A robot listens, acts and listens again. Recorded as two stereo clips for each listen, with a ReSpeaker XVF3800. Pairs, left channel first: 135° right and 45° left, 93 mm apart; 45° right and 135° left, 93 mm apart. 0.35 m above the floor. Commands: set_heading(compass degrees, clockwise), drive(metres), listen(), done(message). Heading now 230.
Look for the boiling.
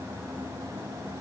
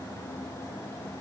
listen()
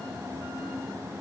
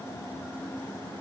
listen()
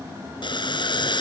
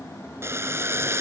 set_heading(35)
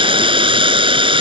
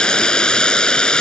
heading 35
set_heading(0)
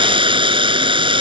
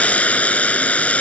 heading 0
set_heading(330)
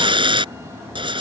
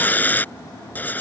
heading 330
set_heading(305)
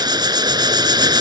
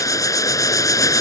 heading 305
done("Facing the boiling.")